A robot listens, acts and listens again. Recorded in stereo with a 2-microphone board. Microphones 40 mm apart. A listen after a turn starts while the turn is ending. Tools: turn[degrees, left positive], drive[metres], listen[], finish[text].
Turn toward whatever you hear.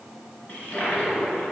Thought: The toilet flushing: about 40° left or 140° left.
Action: turn[40]
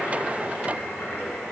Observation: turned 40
Thought: So it is at 100° left.
Action: turn[100]
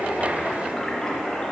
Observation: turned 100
Thought: The toilet flushing is now 15° left.
Action: turn[15]
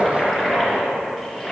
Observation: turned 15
Action: finish[Found it: a toilet flushing, straight ahead, 2 to 4 m away.]